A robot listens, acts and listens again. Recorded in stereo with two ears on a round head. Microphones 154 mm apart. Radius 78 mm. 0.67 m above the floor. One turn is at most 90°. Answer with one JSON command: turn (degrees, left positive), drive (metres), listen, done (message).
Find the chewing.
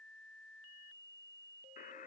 {"listen": true}
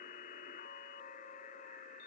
{"listen": true}
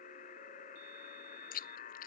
{"turn": 50}
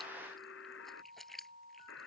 {"done": "Facing the chewing."}